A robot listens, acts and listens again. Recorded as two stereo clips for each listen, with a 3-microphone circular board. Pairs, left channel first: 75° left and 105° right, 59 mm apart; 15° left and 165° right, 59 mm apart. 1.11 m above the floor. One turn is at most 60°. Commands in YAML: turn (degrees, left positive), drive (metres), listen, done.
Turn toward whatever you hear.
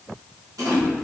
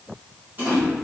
turn: -60
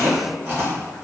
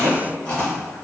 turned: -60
turn: -50
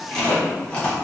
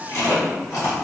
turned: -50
done: "Found it: chewing, straight ahead, 1 to 2 m away."